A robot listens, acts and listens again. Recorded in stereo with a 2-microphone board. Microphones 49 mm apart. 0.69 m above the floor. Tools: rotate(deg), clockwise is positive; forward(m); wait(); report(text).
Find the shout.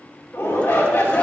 rotate(-60)
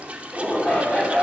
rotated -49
rotate(-30)
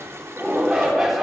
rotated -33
report("Facing the shout.")